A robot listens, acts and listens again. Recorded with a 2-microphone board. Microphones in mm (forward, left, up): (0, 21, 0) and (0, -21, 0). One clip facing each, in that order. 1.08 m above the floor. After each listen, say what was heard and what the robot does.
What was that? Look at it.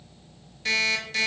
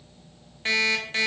The alarm clock: about 30° right or 150° right. Turn 30° right.
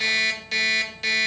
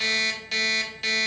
Facing the alarm clock.